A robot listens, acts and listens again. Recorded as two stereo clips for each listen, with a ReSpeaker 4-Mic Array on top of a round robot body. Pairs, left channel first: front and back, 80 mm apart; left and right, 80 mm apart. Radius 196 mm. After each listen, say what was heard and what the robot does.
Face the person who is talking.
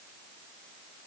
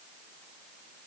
Keep listening.
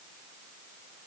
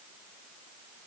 Keep listening.
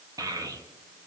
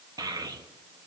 The child speaking: 135° right. Turn 135° right.
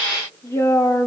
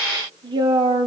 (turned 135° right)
The child speaking is now 60° right. Turn 60° right.
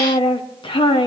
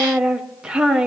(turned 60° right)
The child speaking is now 10° right. Turn 10° right.
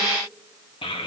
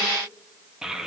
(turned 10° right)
Facing the child speaking.